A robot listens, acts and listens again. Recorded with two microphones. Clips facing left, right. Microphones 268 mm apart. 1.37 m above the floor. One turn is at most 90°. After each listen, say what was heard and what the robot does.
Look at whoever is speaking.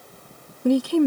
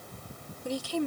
The woman speaking: about 60° left or 120° left. Turn 60° left.
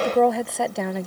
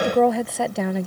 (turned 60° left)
Found it: a woman speaking, straight ahead.